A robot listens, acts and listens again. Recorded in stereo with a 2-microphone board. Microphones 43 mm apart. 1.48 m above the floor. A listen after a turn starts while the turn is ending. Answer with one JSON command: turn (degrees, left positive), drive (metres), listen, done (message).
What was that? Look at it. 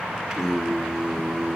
{"turn": -30}
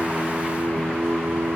{"turn": -135}
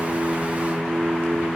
{"turn": -50}
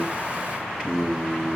{"turn": -25}
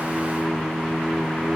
{"done": "Facing the singing, 2 to 4 m away."}